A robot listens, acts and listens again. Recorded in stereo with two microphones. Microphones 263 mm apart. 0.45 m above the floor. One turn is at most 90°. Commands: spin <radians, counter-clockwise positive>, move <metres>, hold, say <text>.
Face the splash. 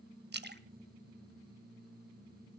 spin -0.70
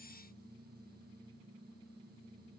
hold
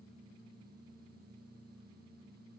say I heard a splash, but can't make it out now. It was about straight ahead or 100° right.